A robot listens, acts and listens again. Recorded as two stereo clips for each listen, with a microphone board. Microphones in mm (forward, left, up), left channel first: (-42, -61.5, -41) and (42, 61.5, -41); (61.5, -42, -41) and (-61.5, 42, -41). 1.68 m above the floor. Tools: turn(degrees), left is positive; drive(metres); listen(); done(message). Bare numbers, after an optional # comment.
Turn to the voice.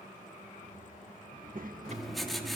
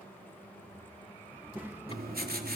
# The child speaking: 70° left.
turn(70)
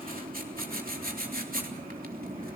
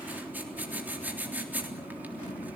listen()
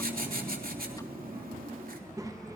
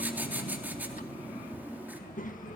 # The child speaking is now 10° right.
turn(-10)
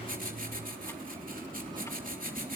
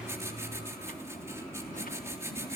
listen()
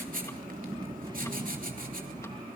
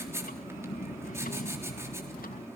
done("Found it: a child speaking, straight ahead, 1 to 2 m away.")